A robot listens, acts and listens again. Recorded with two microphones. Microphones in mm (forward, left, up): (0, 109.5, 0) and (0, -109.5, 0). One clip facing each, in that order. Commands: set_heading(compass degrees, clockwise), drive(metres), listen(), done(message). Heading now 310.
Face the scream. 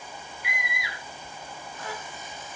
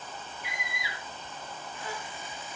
set_heading(240)
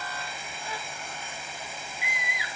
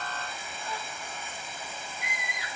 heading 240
done("Found it: a scream, straight ahead.")